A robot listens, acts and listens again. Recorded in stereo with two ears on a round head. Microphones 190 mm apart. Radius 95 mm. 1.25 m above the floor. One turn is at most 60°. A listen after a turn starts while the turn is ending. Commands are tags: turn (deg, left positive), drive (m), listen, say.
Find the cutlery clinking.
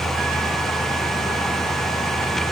<listen/>
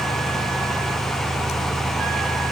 <listen/>
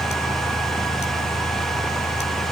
<say>I can't make out cutlery clinking to turn to.</say>